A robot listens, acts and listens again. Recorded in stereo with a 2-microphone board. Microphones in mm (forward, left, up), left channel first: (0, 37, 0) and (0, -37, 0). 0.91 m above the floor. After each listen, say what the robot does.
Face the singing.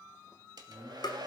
Turn 40° right.
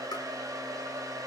Keep listening.
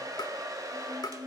Turn 100° right.
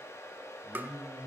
Facing the singing.